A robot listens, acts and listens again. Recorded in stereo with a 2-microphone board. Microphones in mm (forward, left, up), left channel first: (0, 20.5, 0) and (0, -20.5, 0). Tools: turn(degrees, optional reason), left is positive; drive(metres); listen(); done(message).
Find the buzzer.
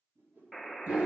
turn(degrees=30)
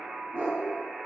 turn(degrees=-25, reason="So it is at 25° right.")
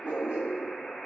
done("Facing the buzzer, under 1 m away.")